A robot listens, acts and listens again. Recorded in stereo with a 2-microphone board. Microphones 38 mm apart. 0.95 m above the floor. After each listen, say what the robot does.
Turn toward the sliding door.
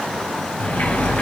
Turn 55° left.
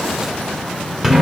Facing the sliding door, 1 to 2 m away.